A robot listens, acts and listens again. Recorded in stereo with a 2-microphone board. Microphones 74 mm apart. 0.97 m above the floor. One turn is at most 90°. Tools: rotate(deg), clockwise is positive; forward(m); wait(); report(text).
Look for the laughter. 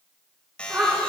rotate(20)
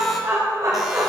rotate(90)
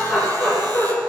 report("Found it: laughter, straight ahead, 2 to 4 m away.")